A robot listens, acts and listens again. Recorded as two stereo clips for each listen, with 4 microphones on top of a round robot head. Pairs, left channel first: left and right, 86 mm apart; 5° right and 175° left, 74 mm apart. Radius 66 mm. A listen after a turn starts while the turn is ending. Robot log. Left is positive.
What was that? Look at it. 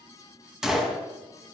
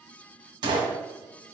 note: The gunshot: 175° right.
cmd yaw -175
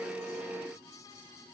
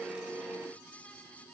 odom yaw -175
end: I heard a gunshot from this way, but can't make it out now.